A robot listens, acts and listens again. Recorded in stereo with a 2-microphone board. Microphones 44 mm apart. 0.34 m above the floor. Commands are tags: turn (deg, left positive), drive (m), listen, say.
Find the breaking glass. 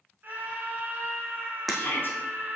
<turn deg="30"/>
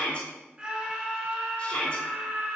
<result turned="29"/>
<listen/>
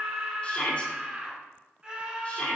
<say>I heard breaking glass, but can't make it out now. It was about 25° right or 150° left.</say>